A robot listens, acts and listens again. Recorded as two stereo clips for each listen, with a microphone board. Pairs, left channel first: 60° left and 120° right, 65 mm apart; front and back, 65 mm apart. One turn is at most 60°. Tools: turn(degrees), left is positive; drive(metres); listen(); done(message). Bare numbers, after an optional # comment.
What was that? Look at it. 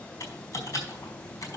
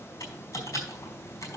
# The typing on a keyboard: 25° left.
turn(25)
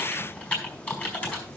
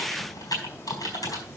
# The typing on a keyboard is now 15° right.
turn(-15)
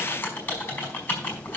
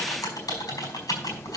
done("Facing the typing on a keyboard.")